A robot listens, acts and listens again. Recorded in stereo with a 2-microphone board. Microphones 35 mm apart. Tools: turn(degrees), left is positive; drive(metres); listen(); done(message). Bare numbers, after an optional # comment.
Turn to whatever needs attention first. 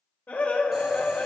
# The scream: about 65° left or 115° left.
turn(65)
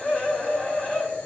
# So it is at 40° left.
turn(40)
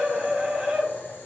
done("Facing the scream.")